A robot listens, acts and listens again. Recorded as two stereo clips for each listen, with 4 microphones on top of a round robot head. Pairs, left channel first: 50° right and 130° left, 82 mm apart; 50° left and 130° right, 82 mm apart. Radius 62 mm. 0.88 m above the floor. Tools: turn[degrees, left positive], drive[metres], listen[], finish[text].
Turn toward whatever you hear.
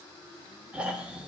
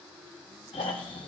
Thought: The snoring: 55° left.
Action: turn[55]
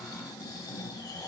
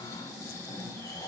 Action: finish[Facing the snoring, 1 to 2 m away.]